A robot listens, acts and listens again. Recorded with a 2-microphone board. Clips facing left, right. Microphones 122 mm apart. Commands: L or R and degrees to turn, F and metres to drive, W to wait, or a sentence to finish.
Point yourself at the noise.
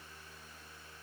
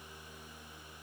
W
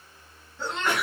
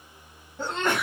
R45
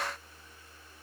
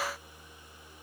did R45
W
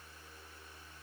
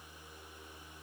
I heard a sneeze, but can't make it out now. It was about straight ahead or 90° right.